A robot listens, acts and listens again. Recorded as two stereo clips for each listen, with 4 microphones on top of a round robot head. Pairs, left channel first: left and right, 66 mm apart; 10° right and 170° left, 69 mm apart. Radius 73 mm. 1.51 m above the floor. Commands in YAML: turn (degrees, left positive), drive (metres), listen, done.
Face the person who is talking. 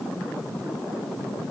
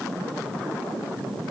listen: true
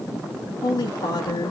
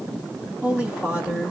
turn: 95
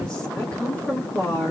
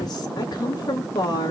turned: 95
turn: 15
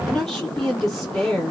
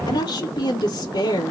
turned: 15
done: "Facing the woman speaking, 2 to 4 m away."